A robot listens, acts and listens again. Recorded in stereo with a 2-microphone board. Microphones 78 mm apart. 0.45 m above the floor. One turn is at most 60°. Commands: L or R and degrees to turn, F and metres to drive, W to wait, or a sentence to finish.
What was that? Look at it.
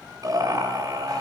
R50
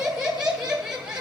R15
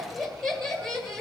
Facing the laughter.